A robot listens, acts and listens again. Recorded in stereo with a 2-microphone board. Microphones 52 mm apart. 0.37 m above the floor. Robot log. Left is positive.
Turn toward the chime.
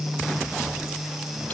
cmd idle
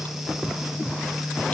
cmd idle
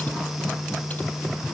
end: I can't make out a chime.